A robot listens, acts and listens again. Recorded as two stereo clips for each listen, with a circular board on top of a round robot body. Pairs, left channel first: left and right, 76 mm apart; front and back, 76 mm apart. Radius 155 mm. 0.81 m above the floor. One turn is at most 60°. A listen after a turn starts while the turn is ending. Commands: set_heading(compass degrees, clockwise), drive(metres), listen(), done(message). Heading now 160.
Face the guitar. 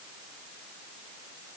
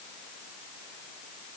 listen()
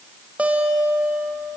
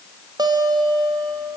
set_heading(220)
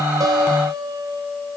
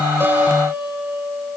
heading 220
set_heading(280)
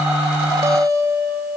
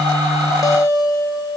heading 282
set_heading(322)
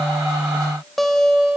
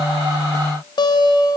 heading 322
done("Facing the guitar.")